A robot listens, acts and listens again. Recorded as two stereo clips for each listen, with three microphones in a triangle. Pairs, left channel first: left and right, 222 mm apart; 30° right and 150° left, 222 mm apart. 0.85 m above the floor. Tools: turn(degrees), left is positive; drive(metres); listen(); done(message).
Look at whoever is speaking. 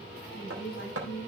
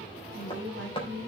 turn(degrees=120)
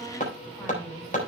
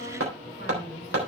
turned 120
listen()
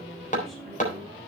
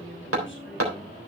listen()
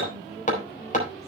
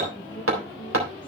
done("Found it: a woman speaking, straight ahead.")